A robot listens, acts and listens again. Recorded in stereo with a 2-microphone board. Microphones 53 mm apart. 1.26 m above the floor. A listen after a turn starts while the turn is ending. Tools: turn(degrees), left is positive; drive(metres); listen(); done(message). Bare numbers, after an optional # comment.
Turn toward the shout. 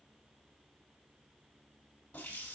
listen()
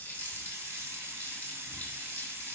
listen()
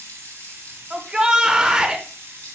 # The shout: about 15° right or 165° right.
turn(-15)
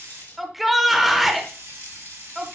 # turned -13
done("Found it: a shout, straight ahead, 1 to 2 m away.")